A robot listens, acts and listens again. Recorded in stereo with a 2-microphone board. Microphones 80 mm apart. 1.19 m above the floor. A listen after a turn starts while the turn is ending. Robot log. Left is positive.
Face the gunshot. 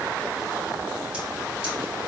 cmd idle
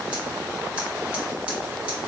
cmd idle
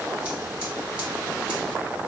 end: I can't make out a gunshot.